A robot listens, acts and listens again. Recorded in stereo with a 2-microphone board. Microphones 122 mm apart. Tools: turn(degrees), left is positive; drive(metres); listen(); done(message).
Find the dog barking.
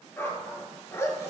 turn(degrees=20)
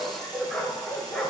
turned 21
turn(degrees=30)
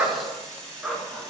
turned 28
done("Found it: a dog barking, straight ahead, 1 to 2 m away.")